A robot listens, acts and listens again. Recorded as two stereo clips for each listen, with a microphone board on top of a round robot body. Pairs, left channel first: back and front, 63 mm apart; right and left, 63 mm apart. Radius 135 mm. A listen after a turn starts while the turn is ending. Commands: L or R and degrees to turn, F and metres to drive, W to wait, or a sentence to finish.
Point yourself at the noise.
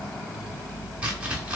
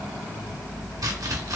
L70
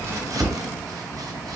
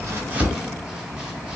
W
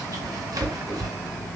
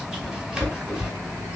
L10
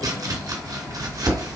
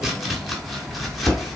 Found it: chopping, straight ahead, 1 to 2 m away.